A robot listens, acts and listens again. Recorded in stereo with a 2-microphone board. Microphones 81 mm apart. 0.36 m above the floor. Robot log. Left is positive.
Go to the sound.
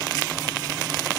cmd idle
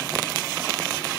cmd idle
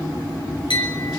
note: The clink: about 75° left or 105° left.
cmd yaw +75
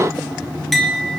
cmd fwd 1.0
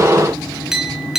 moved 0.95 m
cmd fwd 1.0
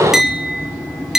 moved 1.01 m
cmd fwd 1.0
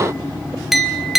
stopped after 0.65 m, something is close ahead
end: I am next to the clink.